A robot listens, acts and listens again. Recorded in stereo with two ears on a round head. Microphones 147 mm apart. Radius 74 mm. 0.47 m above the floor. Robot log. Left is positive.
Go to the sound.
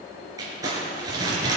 note: The crumpling: about 20° right or 160° right.
cmd yaw -20
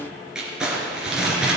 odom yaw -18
cmd fwd 1.0
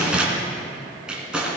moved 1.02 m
cmd fwd 1.0
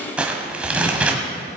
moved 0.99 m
cmd fwd 1.0
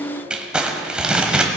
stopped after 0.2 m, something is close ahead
end: I am next to the crumpling.